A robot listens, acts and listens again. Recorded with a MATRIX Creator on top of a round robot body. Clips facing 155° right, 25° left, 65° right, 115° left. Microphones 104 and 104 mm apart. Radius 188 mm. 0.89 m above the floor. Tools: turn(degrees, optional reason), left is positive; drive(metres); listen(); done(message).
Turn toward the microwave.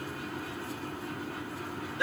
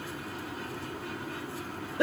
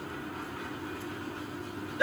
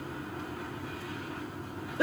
listen()
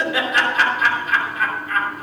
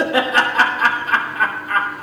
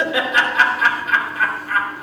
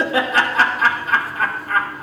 listen()
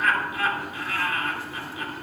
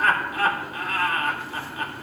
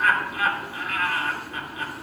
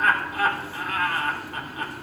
done("I can't make out a microwave to turn to.")